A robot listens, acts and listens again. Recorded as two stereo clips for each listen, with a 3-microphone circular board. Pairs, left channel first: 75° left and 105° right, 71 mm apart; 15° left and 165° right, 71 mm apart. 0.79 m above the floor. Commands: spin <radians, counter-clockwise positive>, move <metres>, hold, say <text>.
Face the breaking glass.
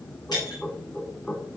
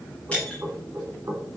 spin 1.57
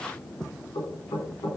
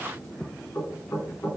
say Facing where the breaking glass came from. I can't hear it now.